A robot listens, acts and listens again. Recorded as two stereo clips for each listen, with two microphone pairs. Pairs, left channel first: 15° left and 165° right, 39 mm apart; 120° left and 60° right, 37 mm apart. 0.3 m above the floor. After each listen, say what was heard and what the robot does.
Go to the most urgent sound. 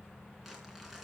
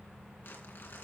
Keep listening.
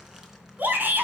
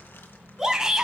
The shout: 130° right. Turn 130° right.
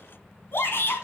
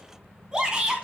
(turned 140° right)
The shout is now 10° left. Turn 10° left.
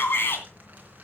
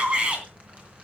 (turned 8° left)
Drive 1.0 m forward.
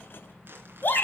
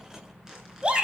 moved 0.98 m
Drive 1.0 m forward.
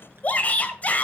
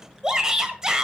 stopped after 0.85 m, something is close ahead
I am next to the shout.